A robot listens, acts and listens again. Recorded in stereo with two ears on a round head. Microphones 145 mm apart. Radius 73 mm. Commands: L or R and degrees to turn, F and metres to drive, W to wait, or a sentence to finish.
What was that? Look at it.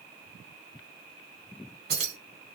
R75
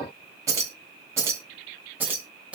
Facing the keys jangling, 1 to 2 m away.